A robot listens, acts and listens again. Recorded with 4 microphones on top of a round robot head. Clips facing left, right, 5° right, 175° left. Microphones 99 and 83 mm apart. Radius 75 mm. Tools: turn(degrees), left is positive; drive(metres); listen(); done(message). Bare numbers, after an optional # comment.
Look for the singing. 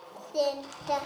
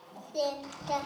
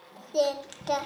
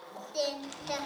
# The singing: 40° left.
turn(40)
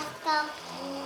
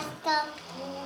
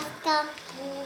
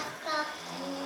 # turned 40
done("Found it: singing, straight ahead, 2 to 4 m away.")